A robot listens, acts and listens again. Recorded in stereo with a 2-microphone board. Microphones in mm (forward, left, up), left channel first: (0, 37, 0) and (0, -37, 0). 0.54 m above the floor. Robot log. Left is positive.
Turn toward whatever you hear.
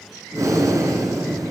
note: The breathing: about 50° right or 130° right.
cmd yaw -50
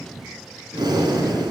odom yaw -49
note: So it is at 80° right.
cmd yaw -80
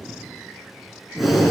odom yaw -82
end: Facing the breathing, 2 to 4 m away.